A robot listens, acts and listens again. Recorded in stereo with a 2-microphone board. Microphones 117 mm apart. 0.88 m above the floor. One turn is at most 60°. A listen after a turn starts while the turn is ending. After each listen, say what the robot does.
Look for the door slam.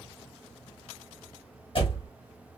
Turn 50° left.
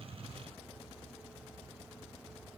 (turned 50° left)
Keep listening.
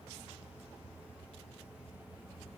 I heard a door slam, but can't make it out now. It was about straight ahead or 80° left.